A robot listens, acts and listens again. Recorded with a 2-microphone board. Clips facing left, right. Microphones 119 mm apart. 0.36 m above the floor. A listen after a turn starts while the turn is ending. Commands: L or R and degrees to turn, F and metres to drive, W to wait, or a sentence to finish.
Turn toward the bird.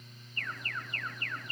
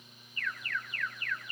W
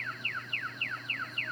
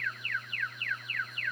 W
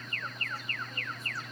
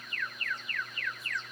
I can't make out a bird, only an alarm.